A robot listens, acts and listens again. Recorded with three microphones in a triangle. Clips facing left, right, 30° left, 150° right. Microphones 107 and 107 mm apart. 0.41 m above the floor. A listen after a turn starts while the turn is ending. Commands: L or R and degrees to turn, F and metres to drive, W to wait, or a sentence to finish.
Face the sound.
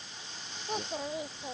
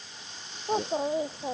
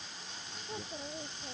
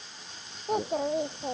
R145
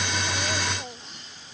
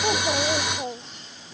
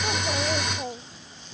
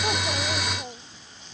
R35
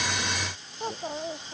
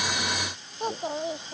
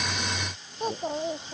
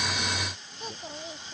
R15
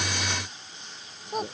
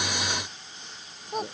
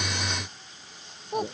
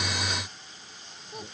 Facing the child speaking.